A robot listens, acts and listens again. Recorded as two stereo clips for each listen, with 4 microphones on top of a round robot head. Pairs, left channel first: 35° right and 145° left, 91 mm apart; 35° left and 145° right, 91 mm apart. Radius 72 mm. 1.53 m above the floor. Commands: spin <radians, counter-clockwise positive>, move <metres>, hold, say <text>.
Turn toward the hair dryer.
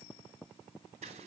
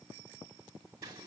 hold
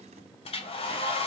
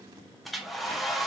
spin -0.96
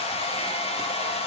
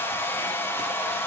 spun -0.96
spin -0.61
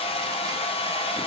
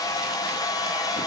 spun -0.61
spin -0.26
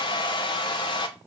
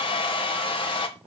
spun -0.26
say Facing the hair dryer.